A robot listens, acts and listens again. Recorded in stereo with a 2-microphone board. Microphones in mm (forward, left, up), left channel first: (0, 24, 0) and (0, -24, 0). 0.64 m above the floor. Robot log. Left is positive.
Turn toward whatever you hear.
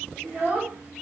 note: The child speaking: about 40° right or 140° right.
cmd yaw -40
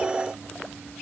cmd idle
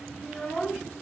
end: Facing the child speaking, under 1 m away.